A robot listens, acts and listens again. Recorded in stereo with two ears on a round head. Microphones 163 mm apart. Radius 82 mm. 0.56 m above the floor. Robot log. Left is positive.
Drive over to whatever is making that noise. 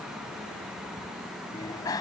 note: The bicycle bell: about 20° left or 160° left.
cmd yaw +20
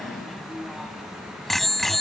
cmd fwd 1.0
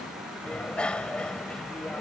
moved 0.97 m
cmd fwd 1.0
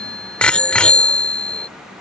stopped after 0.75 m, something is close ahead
end: I am next to the bicycle bell.